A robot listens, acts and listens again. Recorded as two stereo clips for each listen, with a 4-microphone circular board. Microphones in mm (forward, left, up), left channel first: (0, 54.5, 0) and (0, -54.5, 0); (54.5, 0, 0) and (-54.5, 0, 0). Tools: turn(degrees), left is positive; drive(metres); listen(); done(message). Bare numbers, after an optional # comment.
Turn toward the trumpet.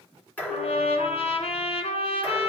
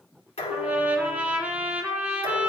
# The trumpet: 105° left.
turn(105)
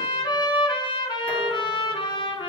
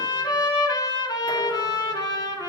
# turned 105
# The trumpet is now 50° left.
turn(50)
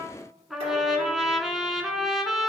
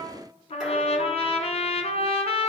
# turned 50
done("Facing the trumpet, under 1 m away.")